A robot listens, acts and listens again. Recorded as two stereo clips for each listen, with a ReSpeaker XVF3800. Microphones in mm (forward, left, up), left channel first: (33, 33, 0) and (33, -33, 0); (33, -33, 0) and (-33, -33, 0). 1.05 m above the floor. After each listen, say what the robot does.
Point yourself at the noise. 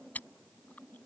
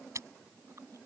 Turn 150° left.
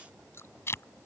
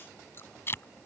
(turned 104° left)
Turn 45° left.
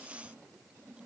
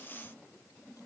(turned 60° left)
Turn 15° right.
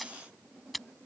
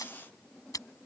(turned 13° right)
Found it: chewing, straight ahead.